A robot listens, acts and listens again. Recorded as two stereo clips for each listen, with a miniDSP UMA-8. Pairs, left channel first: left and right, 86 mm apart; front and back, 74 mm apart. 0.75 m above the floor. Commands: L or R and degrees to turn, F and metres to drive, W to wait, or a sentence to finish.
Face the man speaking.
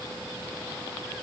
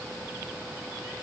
W
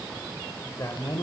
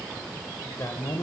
L40
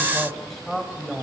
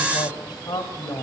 Found it: a man speaking, straight ahead.